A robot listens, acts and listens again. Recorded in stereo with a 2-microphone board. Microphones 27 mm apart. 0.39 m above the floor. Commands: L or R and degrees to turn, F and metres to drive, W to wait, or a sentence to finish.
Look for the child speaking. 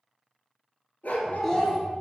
L30
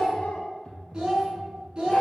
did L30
R35
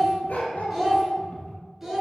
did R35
R10
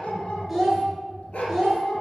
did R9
Found it: a child speaking, straight ahead.